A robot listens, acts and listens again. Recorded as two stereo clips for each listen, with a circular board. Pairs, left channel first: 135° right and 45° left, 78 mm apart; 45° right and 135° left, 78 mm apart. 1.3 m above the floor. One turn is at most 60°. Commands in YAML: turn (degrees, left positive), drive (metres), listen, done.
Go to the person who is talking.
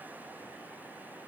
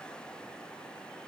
listen: true
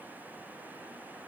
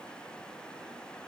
listen: true
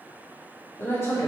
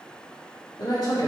turn: -60
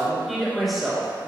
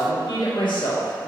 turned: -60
turn: -45
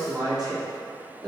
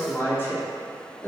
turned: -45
turn: 15
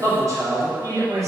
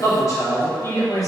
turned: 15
drive: 1.0
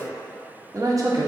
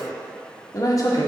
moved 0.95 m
drive: 1.0
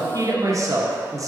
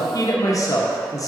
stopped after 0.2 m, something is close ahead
done: "Arrived at the man speaking, straight ahead."